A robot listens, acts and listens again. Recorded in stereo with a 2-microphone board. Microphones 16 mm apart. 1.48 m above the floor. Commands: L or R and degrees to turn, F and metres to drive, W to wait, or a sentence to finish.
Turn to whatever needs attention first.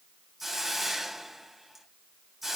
W
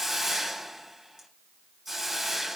W
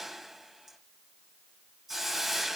I can't make out anything urgent, only a hiss.